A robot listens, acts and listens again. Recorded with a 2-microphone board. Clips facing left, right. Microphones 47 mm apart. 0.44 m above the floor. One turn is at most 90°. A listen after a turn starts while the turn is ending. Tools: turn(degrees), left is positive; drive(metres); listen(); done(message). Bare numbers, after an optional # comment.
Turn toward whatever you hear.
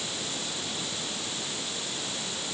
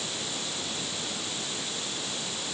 listen()
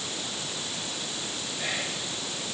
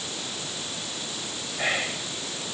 # The whispering: about 50° right or 130° right.
turn(-50)
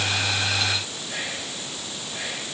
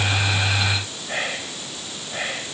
# So it is at 70° right.
turn(-70)
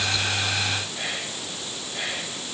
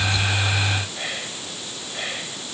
# The whispering is now 15° right.
turn(-15)
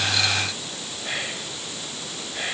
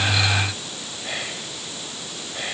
done("Found it: whispering, straight ahead, 2 to 4 m away.")